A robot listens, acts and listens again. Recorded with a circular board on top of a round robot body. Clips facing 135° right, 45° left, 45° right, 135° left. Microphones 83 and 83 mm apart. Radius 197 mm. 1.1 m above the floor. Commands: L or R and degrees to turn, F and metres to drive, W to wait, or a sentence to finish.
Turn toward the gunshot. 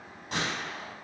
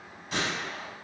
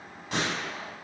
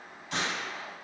R90
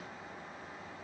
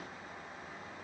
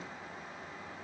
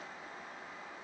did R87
Facing where the gunshot came from. I can't hear it now.